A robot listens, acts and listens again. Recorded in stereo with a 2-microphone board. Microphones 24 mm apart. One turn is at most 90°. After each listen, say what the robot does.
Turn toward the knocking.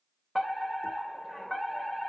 Keep listening.
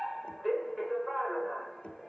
Turn 60° left.
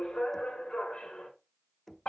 Turn 10° left.
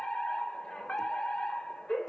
Keep listening.
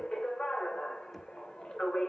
Keep listening.
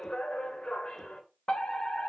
Facing where the knocking came from. I can't hear it now.